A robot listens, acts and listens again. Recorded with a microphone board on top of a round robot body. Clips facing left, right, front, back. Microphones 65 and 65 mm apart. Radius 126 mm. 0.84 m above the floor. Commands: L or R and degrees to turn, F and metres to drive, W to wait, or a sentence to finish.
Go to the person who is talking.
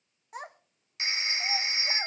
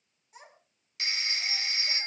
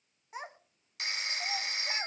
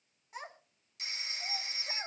L65
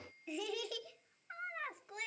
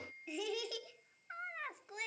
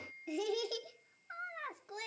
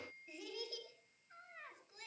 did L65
F1.0
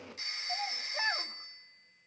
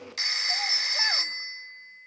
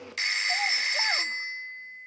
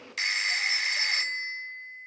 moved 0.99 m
W
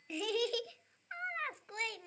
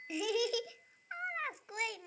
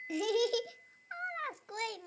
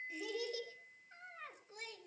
F1.0
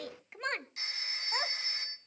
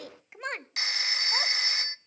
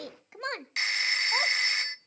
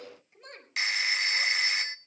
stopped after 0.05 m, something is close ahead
Arrived at the child speaking, straight ahead.